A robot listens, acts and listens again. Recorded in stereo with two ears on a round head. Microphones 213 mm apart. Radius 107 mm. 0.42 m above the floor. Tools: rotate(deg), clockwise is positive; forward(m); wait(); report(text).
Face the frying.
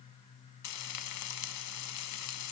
rotate(-90)
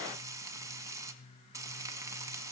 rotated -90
rotate(15)
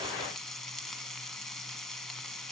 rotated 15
report("Facing the frying, 1 to 2 m away.")